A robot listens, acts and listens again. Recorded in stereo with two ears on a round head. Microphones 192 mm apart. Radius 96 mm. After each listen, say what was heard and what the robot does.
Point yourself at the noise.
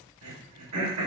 Turn 90° right.
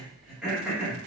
Found it: throat clearing, straight ahead, 1 to 2 m away.